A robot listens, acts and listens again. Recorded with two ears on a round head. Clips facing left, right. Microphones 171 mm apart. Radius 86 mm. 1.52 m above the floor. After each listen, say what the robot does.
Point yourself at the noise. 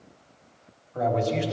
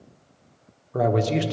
Turn 70° right.
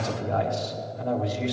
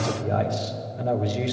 Turn 35° right.
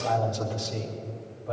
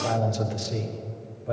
Turn 25° right.
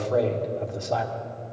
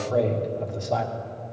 Facing the man speaking.